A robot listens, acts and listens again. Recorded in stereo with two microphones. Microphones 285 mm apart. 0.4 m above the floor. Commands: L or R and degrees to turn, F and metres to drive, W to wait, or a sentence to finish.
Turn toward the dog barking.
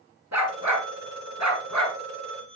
R90
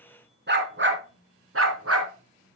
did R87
R55
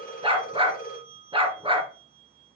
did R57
R20
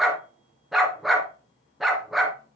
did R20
Facing the dog barking.